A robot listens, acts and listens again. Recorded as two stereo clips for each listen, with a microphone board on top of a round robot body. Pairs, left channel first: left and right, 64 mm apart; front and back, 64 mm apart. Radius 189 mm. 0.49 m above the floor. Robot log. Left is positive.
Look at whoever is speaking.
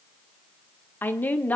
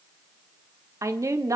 note: The woman speaking: 155° left.
cmd yaw +155
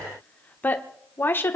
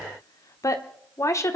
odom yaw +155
note: The woman speaking is now 40° left.
cmd yaw +40
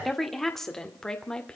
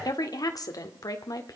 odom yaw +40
note: The woman speaking is now 15° left.
cmd yaw +15
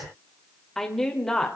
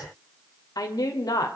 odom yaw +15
note: The woman speaking is now 10° left.
cmd yaw +10
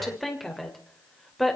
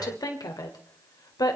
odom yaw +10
end: Found it: a woman speaking, straight ahead, 2 to 4 m away.